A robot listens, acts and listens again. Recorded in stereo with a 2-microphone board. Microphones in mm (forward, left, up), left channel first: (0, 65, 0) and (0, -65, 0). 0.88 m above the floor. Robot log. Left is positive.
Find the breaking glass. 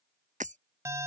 note: The breaking glass: about 75° right or 105° right.
cmd yaw -75
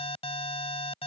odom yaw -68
cmd idle
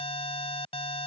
end: I heard breaking glass, but can't make it out now. It was about 5° right or 40° right.